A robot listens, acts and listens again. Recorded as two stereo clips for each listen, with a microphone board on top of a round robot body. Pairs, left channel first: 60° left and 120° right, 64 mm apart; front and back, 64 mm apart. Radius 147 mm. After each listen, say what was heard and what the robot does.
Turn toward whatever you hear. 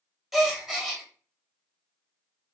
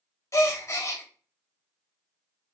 The gasp: 35° right. Turn 35° right.
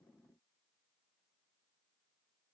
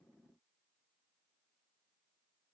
I heard a gasp from this way, but can't make it out now.